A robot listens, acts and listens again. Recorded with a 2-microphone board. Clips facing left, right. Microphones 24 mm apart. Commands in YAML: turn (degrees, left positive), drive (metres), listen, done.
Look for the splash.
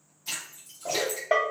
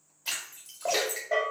turn: -70
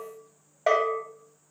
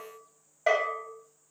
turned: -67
listen: true
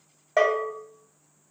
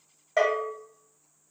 done: "I heard a splash, but can't make it out now. It was about 5° right or 40° right."